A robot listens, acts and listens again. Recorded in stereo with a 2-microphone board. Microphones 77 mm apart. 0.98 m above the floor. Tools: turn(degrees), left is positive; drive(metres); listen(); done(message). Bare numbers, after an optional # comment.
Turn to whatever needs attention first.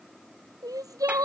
# The crying: about 50° right or 130° right.
turn(-50)
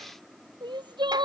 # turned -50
# So it is at 75° right.
turn(-75)
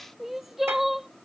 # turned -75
done("Facing the crying.")